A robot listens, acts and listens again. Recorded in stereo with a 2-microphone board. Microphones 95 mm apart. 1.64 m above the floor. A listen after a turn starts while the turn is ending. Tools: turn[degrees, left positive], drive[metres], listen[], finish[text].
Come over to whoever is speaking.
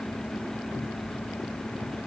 Action: listen[]
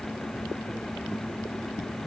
Action: listen[]
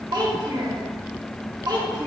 Thought: The child speaking: about 50° right or 130° right.
Action: turn[-50]
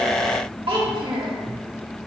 Thought: So it is at 75° right.
Action: turn[-75]
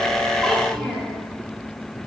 Action: drive[1.0]
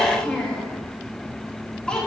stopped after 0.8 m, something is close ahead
Thought: The child speaking is now 10° left.
Action: turn[10]
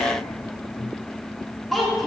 Action: finish[Arrived at the child speaking, straight ahead.]